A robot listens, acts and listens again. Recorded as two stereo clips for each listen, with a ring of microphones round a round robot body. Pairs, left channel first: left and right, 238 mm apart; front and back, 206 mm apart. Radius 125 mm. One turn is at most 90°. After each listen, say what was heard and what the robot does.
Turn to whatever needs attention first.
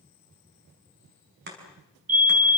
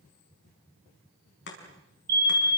The fire alarm: 140° right. Turn 90° right.
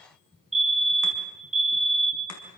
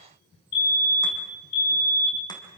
The fire alarm is now 30° right. Turn 30° right.
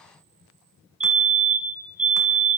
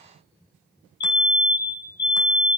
The fire alarm is now 30° right. Turn 30° right.
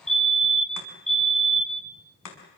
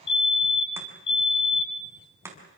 Found it: a fire alarm, straight ahead.